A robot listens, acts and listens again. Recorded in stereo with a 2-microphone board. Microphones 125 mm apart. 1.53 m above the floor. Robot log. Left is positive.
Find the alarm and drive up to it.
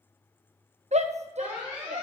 cmd yaw -30
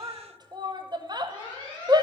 note: So it is at 145° right.
cmd yaw -145
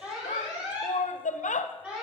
note: The alarm is now 10° right.
cmd yaw -10
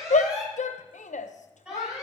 cmd fwd 1.0
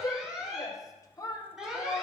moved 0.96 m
cmd fwd 1.0
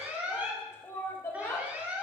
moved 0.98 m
note: The alarm is now 15° right.
cmd yaw -15
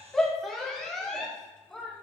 cmd fwd 1.0
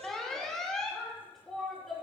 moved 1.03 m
cmd fwd 1.0
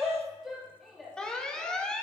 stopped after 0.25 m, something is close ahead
end: I am next to the alarm.